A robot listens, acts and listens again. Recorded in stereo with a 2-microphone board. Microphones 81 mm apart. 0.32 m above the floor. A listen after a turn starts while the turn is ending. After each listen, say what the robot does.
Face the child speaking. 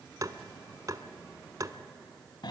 Keep listening.
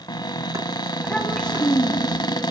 Turn 30° left.
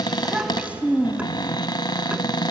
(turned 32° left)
Turn 20° right.
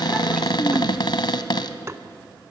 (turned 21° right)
Keep listening.
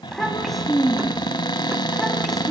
Found it: a child speaking, straight ahead, 1 to 2 m away.